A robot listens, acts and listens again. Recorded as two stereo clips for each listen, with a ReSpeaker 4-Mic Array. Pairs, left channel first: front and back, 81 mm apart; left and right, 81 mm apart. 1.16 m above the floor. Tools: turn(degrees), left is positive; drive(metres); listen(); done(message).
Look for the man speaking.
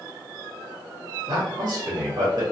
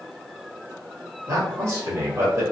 turn(degrees=-145)
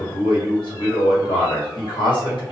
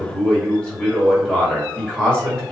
turn(degrees=10)
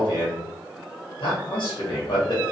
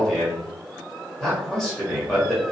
done("Facing the man speaking.")